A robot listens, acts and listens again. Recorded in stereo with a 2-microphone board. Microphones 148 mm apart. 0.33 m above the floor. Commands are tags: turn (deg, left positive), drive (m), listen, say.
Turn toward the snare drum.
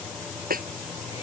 <turn deg="-75"/>
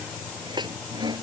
<turn deg="-30"/>
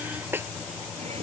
<turn deg="-15"/>
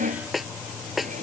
<say>Facing the snare drum.</say>